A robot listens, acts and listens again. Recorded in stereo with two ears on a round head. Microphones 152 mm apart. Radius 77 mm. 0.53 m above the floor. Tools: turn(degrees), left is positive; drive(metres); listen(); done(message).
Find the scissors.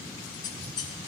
turn(degrees=25)
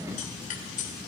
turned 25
turn(degrees=125)
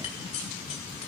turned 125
turn(degrees=45)
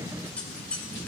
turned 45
turn(degrees=10)
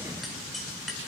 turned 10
done("Found it: scissors, straight ahead, 2 to 4 m away.")